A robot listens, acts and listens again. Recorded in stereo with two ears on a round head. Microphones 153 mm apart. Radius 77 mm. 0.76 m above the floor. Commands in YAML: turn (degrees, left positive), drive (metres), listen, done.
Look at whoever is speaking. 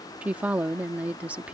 turn: -30
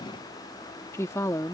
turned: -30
turn: 20
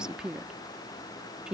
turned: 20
done: "Facing the woman speaking."